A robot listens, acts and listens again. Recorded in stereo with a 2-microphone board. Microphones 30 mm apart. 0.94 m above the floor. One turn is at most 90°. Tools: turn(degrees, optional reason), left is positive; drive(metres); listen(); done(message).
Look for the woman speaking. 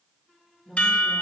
turn(degrees=-15, reason="The woman speaking: about 15° right or 165° right.")
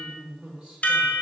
turn(degrees=-35, reason="The woman speaking: about 35° right or 145° right.")
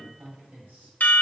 turn(degrees=-90, reason="So it is at 110° right.")
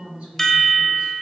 turn(degrees=-40, reason="The woman speaking is now 40° right.")
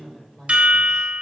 turn(degrees=25, reason="The woman speaking is now 25° left.")
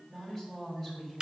done("Found it: a woman speaking, straight ahead.")